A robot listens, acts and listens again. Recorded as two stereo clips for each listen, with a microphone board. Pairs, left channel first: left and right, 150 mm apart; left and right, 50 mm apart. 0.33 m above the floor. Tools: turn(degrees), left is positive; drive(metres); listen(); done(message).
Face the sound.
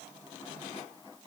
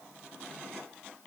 listen()
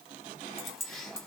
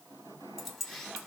turn(degrees=30)
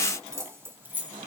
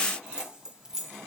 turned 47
turn(degrees=-10)
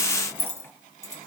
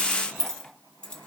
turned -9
turn(degrees=25)
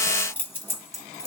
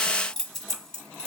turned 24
turn(degrees=20)
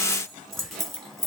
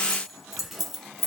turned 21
done("Found it: keys jangling, straight ahead.")